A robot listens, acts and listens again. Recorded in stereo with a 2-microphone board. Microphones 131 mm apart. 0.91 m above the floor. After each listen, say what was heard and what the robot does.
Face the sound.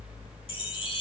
The chime: about 40° left or 140° left. Turn 40° left.
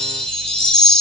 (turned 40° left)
So it is at 10° left. Turn 10° left.
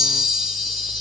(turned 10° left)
Facing the chime.